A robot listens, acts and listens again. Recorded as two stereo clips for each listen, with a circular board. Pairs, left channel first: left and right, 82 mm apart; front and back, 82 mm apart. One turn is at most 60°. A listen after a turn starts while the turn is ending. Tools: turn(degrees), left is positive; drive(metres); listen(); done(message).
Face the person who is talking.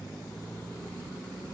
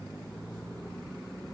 listen()
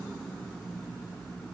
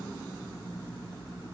listen()
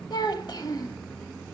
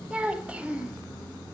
turn(degrees=60)
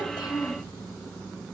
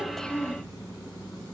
turn(degrees=50)
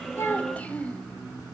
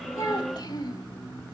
turn(degrees=20)
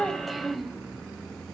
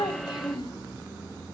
done("Found it: a child speaking, straight ahead, under 1 m away.")